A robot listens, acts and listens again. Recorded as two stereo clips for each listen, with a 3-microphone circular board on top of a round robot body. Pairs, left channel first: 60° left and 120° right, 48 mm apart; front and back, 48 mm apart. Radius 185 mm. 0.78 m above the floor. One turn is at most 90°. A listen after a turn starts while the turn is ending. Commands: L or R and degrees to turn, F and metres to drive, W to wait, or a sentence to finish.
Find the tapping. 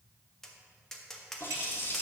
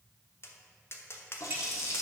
R20
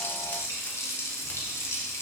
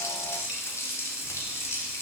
W
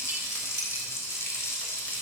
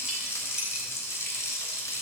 W
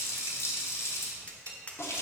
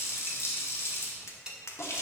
Facing the tapping.